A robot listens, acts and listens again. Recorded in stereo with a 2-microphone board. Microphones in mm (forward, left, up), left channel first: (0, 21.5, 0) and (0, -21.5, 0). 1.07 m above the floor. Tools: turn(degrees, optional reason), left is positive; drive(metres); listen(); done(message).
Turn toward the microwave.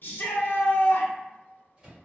turn(degrees=-20, reason="The microwave: about 20° right or 160° right.")
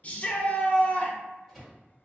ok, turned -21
done("Facing the microwave.")